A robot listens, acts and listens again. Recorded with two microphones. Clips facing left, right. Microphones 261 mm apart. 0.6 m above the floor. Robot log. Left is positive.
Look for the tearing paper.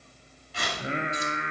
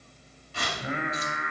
note: The tearing paper: about 50° right or 130° right.
cmd yaw -50
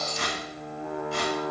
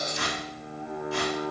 note: So it is at 80° right.
cmd yaw -80
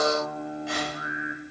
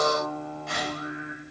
end: Found it: tearing paper, straight ahead.